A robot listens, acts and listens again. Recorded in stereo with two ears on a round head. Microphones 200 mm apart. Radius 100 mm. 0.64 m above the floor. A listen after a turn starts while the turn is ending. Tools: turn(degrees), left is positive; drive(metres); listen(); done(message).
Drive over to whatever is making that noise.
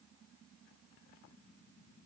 listen()
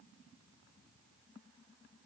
listen()
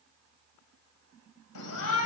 turn(degrees=90)
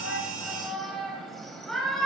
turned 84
drive(metres=1.0)
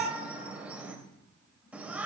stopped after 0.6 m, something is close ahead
done("Something is in my way. I am facing the shout but have not reached it.")